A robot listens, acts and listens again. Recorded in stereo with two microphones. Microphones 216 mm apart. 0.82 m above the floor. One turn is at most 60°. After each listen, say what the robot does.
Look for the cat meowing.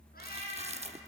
Turn 45° left.
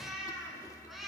Found it: a cat meowing, straight ahead.